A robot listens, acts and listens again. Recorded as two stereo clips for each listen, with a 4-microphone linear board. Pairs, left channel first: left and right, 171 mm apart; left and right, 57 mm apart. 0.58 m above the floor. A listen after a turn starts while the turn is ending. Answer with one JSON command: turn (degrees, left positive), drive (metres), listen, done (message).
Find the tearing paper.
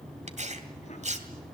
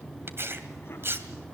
{"turn": -45}
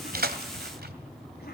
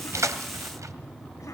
{"listen": true}
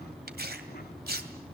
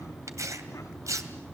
{"turn": -85}
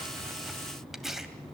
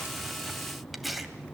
{"done": "Facing the tearing paper."}